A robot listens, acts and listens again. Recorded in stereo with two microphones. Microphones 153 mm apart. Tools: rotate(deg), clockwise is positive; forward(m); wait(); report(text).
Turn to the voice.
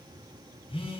wait()
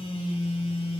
wait()
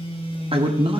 rotate(35)
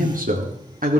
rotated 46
rotate(115)
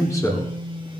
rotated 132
rotate(-20)
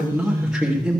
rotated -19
report("Found it: a man speaking, straight ahead.")